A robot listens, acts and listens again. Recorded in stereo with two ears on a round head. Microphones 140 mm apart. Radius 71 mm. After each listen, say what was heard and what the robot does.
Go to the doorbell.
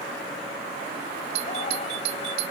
The doorbell: about 75° right or 105° right. Turn 75° right.
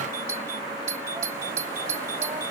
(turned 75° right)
So it is at 20° right. Turn 20° right.
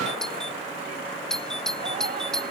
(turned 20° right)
Drive 1.0 m forward.
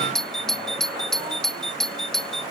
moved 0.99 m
Drive 1.0 m forward.
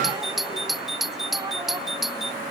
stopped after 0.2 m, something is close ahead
Arrived at the doorbell, straight ahead.